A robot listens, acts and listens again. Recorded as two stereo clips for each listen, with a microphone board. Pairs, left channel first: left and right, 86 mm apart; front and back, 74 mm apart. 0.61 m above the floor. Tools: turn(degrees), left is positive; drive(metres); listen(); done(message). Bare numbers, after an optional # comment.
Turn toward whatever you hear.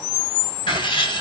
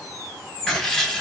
# The writing: 85° left.
turn(85)
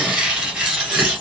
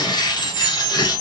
# The writing is now 10° right.
turn(-10)
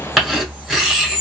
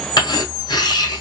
done("Found it: writing, straight ahead, 1 to 2 m away.")